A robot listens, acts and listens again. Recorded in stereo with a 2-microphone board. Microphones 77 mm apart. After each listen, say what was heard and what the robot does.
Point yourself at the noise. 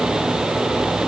Keep listening.
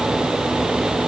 Keep listening.
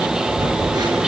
The phone buzzing: about 60° right or 120° right. Turn 60° right.
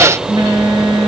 So it is at 60° right. Turn 60° right.
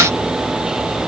Keep listening.
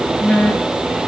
The phone buzzing is now 10° left. Turn 10° left.
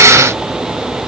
Keep listening.
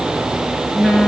Found it: a phone buzzing, straight ahead.